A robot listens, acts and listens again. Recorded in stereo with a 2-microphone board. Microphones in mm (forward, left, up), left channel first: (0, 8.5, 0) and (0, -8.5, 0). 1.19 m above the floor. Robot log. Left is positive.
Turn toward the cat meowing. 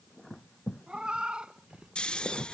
note: The cat meowing: about 65° right or 115° right.
cmd yaw -65
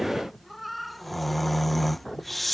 end: Facing the cat meowing.